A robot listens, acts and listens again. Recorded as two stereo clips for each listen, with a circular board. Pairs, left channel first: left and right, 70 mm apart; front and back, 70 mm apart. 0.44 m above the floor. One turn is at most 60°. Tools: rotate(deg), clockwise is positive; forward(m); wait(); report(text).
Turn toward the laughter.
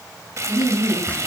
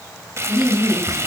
rotate(-60)
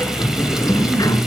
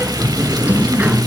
rotate(-35)
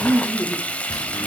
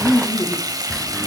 rotate(-20)
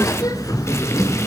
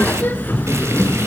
wait()
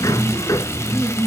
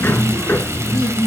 rotate(10)
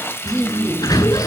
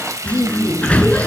report("Facing the laughter.")